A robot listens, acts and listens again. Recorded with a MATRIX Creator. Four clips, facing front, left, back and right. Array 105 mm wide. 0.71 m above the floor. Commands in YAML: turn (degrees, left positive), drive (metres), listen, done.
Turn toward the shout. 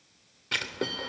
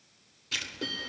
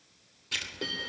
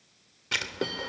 listen: true
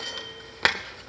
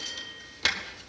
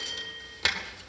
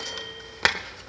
listen: true
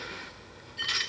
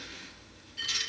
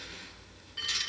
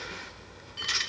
done: "I can't make out a shout to turn to."